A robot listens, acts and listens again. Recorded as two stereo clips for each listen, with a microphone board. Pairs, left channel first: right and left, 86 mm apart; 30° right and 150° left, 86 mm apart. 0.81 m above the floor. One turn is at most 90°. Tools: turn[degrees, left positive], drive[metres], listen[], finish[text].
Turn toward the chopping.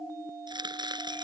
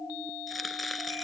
Thought: The chopping: 60° left.
Action: turn[60]
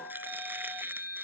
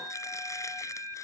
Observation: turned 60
Action: listen[]
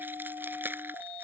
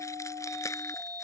Thought: The chopping is now 25° left.
Action: turn[25]
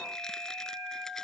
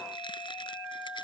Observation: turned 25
Action: listen[]
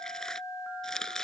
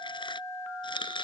Action: finish[Facing the chopping.]